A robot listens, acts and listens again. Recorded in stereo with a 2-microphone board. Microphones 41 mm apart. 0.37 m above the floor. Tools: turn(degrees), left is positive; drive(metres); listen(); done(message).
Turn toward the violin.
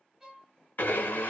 turn(degrees=-15)
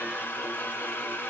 listen()
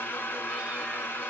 listen()
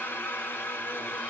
done("I heard a violin, but can't make it out now. It was about straight ahead or 150° right.")